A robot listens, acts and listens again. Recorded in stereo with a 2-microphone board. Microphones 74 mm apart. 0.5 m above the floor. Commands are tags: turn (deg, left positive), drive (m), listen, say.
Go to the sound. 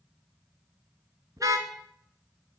<turn deg="-50"/>
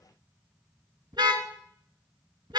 <turn deg="-85"/>
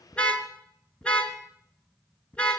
<turn deg="15"/>
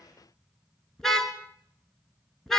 <drive m="1.0"/>
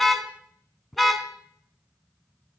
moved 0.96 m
<drive m="1.0"/>
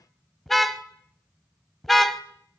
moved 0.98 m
<drive m="1.0"/>
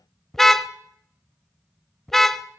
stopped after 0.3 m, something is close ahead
<say>I am next to the car horn.</say>